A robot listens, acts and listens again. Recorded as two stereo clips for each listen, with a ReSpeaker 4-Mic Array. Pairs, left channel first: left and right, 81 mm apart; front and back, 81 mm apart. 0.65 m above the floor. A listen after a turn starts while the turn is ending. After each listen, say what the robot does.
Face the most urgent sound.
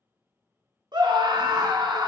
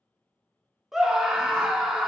Turn 95° right.
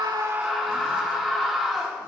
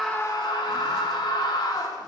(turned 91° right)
Found it: a scream, straight ahead.